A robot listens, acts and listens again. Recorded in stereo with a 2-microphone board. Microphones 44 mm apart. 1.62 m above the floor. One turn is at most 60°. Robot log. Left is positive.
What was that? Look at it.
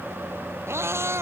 cmd yaw -60
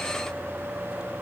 note: Nothing new. It was at 30° right.
cmd yaw -30
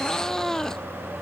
note: The cat meowing is now 10° left.
cmd yaw +10
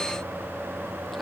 cmd idle
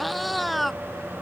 end: Found it: a cat meowing, straight ahead.